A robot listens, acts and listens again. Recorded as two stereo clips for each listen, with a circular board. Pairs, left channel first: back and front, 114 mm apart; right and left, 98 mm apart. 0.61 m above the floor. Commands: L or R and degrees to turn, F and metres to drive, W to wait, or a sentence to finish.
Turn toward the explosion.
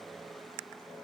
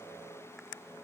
W
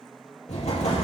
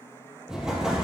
L175
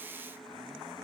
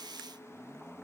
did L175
I heard an explosion from this way, but can't make it out now.